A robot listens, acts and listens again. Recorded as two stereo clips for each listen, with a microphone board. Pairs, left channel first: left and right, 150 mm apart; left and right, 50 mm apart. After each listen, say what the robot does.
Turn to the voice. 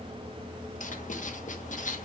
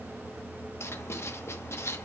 Keep listening.
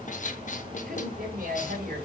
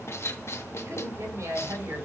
Turn 90° right.
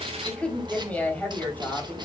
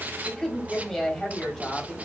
Turn 15° left.
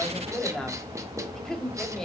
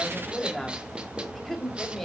Facing the woman speaking.